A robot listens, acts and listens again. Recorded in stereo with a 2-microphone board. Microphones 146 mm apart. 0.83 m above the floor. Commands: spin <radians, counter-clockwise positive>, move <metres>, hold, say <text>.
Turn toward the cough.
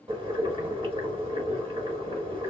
hold
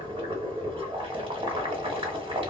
hold
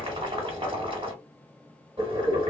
say I can't make out a cough to turn to.